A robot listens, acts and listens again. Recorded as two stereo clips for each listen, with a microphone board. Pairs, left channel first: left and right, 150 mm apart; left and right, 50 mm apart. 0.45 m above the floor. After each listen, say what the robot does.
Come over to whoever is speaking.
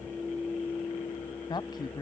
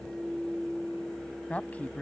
Turn 30° left.
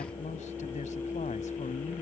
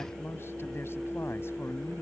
Keep listening.
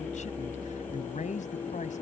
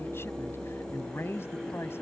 Turn 120° left.
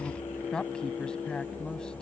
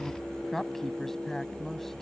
Drive 1.0 m forward.
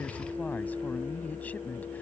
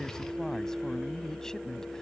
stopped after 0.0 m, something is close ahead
Turn 10° left.
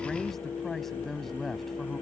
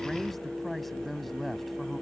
Blocked. The woman speaking is further on, straight ahead.